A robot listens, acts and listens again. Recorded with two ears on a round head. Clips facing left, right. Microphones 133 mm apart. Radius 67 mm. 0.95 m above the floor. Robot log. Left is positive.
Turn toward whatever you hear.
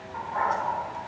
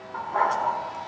note: The dog barking: about 70° right or 110° right.
cmd yaw -70
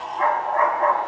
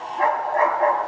note: So it is at 35° right.
cmd yaw -35
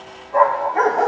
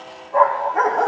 end: Facing the dog barking.